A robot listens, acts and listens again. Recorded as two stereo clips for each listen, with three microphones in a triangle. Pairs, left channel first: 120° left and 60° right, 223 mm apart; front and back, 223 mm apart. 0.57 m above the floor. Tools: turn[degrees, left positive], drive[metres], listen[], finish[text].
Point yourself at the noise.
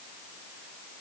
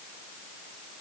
Action: listen[]
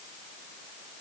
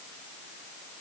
Action: listen[]
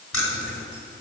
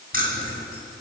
Thought: The keys jangling: 130° left.
Action: turn[130]
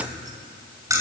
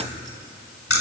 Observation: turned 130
Thought: The keys jangling is now 15° left.
Action: turn[15]
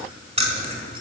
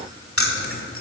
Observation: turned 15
Action: finish[Facing the keys jangling, 1 to 2 m away.]